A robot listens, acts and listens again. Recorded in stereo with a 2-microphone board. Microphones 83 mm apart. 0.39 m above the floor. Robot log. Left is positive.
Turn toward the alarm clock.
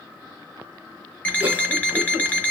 note: The alarm clock: about 20° left or 160° left.
cmd yaw +20
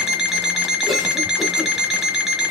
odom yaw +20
end: Found it: an alarm clock, straight ahead.